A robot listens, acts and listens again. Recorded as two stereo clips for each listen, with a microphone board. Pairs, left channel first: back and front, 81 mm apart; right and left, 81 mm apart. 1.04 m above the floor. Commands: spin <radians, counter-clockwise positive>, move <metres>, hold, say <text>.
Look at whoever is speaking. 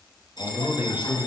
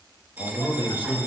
spin -1.31
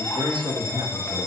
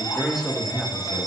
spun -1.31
say Found it: a man speaking, straight ahead.